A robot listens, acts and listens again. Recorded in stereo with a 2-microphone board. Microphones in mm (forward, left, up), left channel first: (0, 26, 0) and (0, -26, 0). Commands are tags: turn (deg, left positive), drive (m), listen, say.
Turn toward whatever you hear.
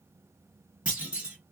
<turn deg="-20"/>
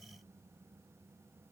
<listen/>
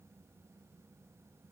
<say>I heard a clunk, but can't make it out now. It was about straight ahead or 140° right.</say>